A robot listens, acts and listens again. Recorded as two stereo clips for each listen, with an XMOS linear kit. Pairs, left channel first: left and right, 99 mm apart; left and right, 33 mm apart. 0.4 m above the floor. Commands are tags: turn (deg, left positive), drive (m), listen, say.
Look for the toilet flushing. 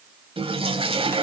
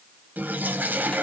<turn deg="-75"/>
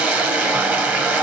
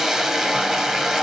<turn deg="-20"/>
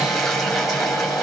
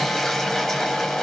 <say>Facing the toilet flushing, 1 to 2 m away.</say>